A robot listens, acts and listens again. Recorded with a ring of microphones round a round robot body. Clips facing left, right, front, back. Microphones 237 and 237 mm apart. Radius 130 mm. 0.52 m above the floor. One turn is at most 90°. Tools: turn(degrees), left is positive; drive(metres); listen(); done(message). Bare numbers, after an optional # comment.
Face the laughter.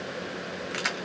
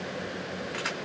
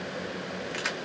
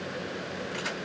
listen()
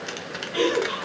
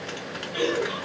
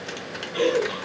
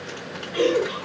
# The laughter: 110° left.
turn(90)
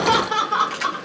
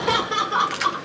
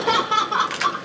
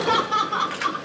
done("Facing the laughter, 1 to 2 m away.")